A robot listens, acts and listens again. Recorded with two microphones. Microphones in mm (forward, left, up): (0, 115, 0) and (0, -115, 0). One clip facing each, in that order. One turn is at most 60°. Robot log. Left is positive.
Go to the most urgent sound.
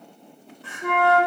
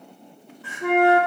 cmd yaw +30
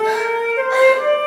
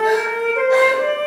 cmd idle
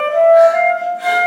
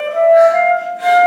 cmd idle
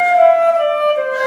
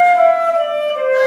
end: I heard crying, but can't make it out now. It was about 30° right or 150° left. I did not reach it.